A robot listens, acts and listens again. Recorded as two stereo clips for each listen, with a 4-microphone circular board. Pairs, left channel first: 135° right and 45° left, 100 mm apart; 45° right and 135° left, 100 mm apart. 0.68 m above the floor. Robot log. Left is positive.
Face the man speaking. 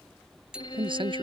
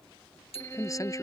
note: The man speaking: 10° left.
cmd yaw +10
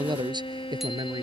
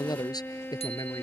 end: Found it: a man speaking, straight ahead.